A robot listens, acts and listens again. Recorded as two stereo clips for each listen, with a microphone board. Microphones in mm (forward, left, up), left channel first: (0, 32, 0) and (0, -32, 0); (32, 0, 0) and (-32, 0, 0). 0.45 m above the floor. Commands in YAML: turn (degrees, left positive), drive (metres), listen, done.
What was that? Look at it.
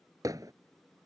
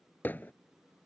turn: -60
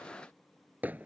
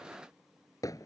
turn: -25
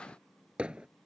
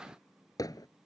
turn: -15
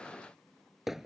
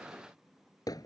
done: "Found it: hammering, straight ahead."